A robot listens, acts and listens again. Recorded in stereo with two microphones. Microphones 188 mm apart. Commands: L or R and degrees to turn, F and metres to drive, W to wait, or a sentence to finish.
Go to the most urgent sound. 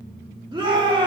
R25
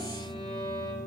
W
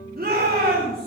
R130
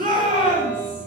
R45
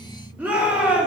R10
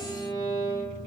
W
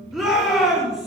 F1.0
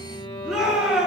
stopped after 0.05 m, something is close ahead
Something is in my way. I am facing the shout but have not reached it.